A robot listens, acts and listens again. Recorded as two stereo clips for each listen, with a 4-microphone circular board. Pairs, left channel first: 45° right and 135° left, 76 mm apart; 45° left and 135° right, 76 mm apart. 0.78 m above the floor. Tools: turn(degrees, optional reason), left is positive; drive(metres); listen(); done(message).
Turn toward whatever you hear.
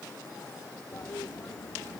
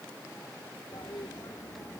turn(degrees=10, reason="The toilet flushing: 10° left.")
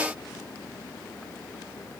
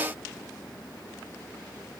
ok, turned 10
done("Facing the toilet flushing.")